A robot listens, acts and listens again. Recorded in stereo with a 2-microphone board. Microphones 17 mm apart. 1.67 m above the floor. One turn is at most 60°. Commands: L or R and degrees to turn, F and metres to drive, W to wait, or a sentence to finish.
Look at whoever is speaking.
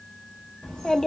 L55
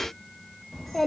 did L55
L20
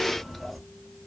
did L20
Found it: a child speaking, straight ahead.